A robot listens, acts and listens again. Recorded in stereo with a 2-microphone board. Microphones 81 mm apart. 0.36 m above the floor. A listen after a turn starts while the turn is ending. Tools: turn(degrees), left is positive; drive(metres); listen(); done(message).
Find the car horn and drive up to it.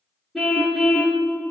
turn(degrees=30)
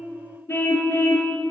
turn(degrees=150)
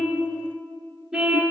turn(degrees=-10)
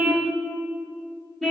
drive(metres=1.0)
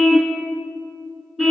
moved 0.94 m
drive(metres=1.0)
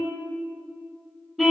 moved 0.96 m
drive(metres=1.0)
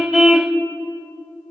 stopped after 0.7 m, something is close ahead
done("I am next to the car horn.")